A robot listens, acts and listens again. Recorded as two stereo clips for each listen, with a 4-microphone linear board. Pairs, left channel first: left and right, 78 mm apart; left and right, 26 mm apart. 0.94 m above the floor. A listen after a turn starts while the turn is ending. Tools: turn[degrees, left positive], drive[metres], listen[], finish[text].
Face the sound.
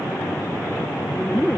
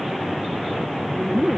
Action: turn[-30]
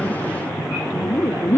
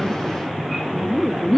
Thought: So it is at 25° left.
Action: turn[25]
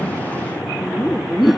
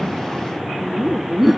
Action: finish[Facing the laughter.]